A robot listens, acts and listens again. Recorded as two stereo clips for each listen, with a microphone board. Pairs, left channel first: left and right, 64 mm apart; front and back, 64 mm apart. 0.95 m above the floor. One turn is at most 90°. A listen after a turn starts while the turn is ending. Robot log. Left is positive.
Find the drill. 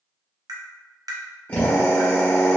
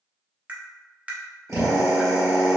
note: The drill: 150° left.
cmd yaw +90
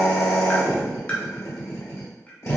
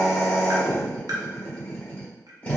note: The drill is now 60° left.
cmd yaw +60
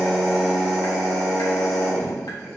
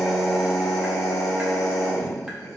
end: Facing the drill.